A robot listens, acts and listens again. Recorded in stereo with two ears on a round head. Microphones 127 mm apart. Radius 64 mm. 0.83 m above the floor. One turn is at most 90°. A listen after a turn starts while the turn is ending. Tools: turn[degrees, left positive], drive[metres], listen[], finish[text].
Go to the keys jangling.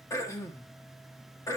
Action: listen[]
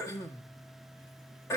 Action: listen[]
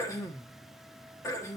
Action: finish[I can't make out keys jangling to turn to.]